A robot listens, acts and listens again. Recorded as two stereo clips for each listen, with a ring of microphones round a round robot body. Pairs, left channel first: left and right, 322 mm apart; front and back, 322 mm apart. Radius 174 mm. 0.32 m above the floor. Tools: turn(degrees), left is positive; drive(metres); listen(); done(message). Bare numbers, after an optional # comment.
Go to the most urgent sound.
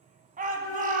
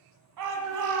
# The shout: 155° right.
turn(-155)
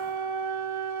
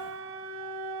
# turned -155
listen()
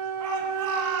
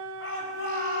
# The shout is now 55° right.
turn(-55)
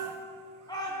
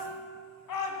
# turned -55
# The shout is now 10° left.
turn(10)
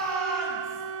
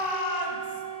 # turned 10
drive(1.0)
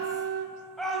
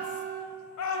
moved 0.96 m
drive(1.0)
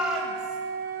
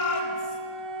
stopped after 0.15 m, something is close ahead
done("I am next to the shout.")